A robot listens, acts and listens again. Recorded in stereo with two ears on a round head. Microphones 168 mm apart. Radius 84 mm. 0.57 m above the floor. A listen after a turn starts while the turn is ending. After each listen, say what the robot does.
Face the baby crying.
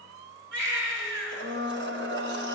Turn 70° right.
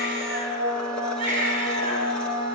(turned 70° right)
Turn 40° right.
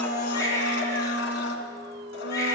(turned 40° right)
Turn 15° left.
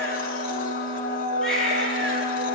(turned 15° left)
Facing the baby crying, over 4 m away.